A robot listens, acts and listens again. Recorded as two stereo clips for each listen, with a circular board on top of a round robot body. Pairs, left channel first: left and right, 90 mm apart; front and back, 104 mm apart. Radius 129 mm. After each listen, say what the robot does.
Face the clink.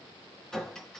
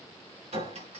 Turn 175° left.
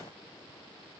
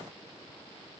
Keep listening.
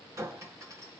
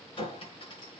Turn 35° right.
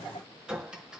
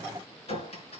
Turn 10° right.
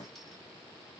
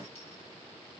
Keep listening.
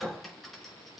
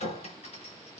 Facing the clink, over 4 m away.